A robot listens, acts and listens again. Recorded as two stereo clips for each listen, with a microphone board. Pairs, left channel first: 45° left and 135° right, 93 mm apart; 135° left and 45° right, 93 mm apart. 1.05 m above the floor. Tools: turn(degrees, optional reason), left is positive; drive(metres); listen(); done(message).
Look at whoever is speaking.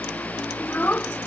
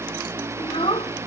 turn(degrees=115, reason="The child speaking: 115° left.")
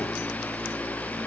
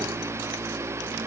listen()
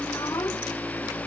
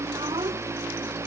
listen()
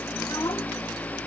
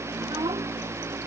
done("I heard a child speaking from this way, but can't make it out now.")